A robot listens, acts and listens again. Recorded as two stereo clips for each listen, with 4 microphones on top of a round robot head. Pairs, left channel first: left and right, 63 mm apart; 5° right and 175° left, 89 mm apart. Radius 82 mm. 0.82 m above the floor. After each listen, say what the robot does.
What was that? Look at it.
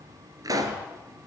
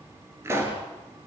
Turn 115° right.
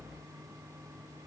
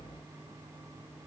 Facing where the pop came from. I can't hear it now.